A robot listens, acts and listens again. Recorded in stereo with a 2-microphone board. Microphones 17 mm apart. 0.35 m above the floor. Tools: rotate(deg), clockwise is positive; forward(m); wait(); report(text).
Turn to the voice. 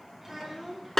rotate(20)
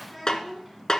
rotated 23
report("Found it: a child speaking, straight ahead.")